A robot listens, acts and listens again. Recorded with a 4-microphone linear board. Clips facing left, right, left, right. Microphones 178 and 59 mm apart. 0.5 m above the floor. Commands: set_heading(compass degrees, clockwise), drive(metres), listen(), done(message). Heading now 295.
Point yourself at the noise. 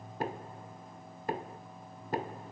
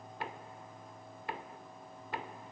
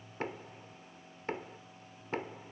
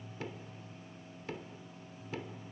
set_heading(255)
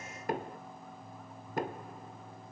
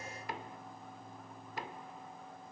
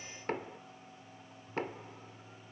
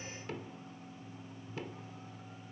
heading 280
set_heading(150)
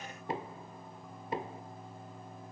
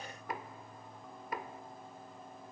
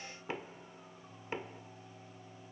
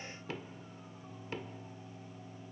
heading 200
set_heading(170)
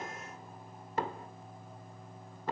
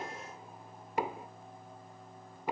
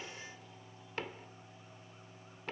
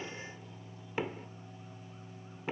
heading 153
set_heading(168)
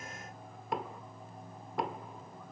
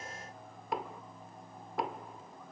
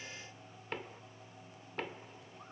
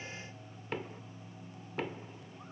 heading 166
done("Facing the knocking, under 1 m away.")